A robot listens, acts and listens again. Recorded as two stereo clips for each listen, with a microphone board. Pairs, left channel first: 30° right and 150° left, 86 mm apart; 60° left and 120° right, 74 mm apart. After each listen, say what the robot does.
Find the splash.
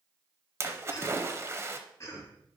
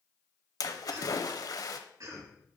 Turn 95° left.
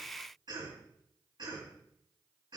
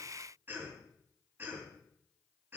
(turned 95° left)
I heard a splash from this way, but can't make it out now.